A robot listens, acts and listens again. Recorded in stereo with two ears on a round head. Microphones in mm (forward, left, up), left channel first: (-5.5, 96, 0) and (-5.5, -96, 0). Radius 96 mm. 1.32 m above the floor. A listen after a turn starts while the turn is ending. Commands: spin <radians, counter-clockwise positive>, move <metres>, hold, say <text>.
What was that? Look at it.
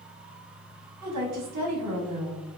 spin -1.57
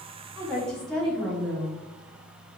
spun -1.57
say Facing the woman speaking, 1 to 2 m away.